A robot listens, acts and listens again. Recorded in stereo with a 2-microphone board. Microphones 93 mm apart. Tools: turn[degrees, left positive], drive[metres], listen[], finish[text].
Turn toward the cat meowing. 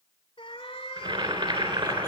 Action: turn[90]
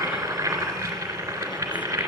Action: listen[]
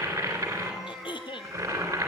Action: finish[Facing the cat meowing.]